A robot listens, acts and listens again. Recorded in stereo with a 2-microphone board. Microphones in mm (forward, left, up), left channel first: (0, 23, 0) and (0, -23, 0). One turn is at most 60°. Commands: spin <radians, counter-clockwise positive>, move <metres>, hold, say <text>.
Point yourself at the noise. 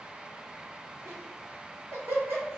spin -1.05
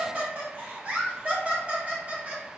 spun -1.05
spin -0.61
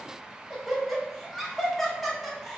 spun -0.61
say Found it: laughter, straight ahead.